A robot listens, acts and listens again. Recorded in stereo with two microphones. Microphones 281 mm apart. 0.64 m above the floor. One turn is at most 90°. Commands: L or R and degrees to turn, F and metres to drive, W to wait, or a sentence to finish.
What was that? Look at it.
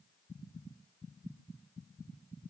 W
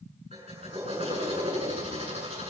R20
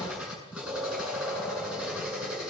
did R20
Found it: a drill, straight ahead, over 4 m away.